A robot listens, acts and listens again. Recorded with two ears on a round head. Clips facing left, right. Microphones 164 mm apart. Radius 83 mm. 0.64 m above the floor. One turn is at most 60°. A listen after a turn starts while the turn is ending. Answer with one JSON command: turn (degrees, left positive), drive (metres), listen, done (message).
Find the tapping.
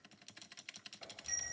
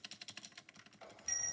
{"listen": true}
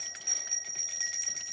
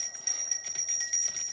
{"listen": true}
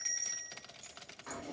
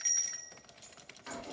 {"done": "I can't make out tapping to turn to."}